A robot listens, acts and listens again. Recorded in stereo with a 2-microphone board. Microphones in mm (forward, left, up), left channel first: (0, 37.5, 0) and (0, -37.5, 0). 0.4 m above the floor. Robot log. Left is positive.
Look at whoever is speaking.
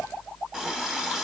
cmd idle
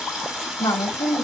note: The woman speaking: about 55° left or 125° left.
cmd yaw +55
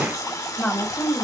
note: So it is at 10° left.
cmd yaw +10
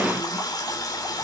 cmd idle
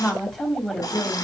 end: Found it: a woman speaking, straight ahead.